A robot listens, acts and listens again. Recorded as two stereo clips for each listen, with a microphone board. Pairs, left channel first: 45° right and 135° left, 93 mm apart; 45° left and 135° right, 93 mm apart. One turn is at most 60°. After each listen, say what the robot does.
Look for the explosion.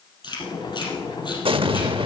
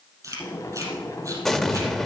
Turn 60° left.
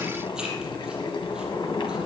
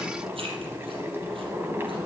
Turn 60° left.
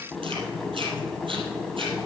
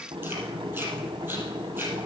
Turn 15° left.
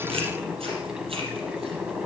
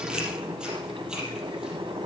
Facing where the explosion came from. I can't hear it now.